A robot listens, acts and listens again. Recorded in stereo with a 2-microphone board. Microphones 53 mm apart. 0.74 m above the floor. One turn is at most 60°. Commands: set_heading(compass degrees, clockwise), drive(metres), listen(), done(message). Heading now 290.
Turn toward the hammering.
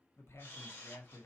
listen()
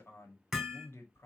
set_heading(260)
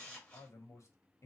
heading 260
listen()
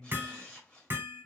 set_heading(295)
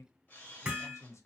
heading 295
set_heading(310)
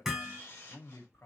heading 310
done("Found it: hammering, straight ahead.")